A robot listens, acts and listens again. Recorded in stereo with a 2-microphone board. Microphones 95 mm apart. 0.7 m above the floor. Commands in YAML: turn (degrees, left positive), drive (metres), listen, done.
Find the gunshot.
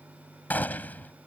turn: 20
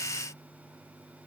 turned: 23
listen: true
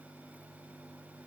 done: "I heard a gunshot, but can't make it out now. It was about 5° right or 140° left."